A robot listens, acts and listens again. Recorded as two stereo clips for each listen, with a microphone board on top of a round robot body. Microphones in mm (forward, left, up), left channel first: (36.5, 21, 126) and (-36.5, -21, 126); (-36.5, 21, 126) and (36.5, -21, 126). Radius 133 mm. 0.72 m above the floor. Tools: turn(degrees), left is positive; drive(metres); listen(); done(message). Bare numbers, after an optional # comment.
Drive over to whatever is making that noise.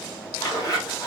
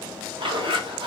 # The zipper: 15° right.
turn(-15)
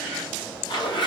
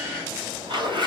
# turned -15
drive(1.0)
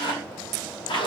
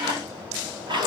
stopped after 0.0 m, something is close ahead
done("Something is in my way. I am facing the zipper but have not reached it.")